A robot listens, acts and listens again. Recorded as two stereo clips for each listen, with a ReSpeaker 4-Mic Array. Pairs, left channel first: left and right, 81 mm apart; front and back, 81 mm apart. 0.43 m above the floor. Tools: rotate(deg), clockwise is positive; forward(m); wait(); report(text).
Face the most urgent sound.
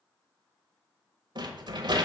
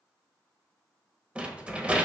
wait()
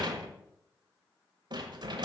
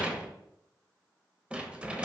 wait()
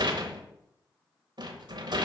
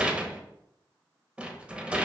report("I can't make out anything urgent to turn to.")